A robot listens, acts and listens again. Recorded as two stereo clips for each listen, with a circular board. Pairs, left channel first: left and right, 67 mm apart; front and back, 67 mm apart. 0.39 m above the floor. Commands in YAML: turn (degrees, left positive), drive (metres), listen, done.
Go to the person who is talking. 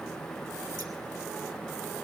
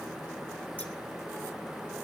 listen: true
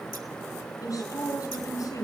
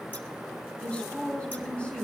turn: 70
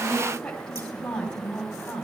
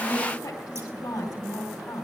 turn: 10
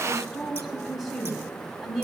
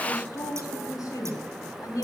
drive: 1.0
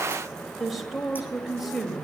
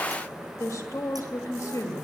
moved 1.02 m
drive: 1.0
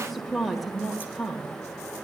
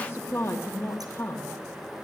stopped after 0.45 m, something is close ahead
done: "Arrived at the woman speaking, straight ahead."